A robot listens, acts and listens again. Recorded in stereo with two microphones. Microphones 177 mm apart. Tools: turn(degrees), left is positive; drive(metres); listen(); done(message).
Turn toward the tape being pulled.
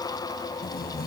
turn(degrees=60)
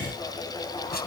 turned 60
turn(degrees=60)
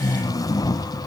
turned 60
turn(degrees=20)
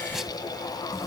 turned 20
listen()
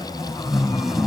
done("Found it: tape being pulled, straight ahead.")